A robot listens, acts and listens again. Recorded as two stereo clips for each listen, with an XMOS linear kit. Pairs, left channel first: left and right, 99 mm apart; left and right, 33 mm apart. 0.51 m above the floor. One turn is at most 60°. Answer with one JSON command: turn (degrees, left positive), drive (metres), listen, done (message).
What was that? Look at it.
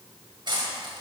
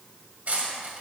{"turn": -50}
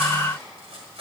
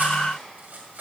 {"turn": -60}
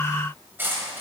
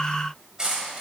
{"turn": -20}
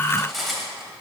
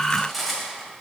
{"done": "Facing the cutlery clinking."}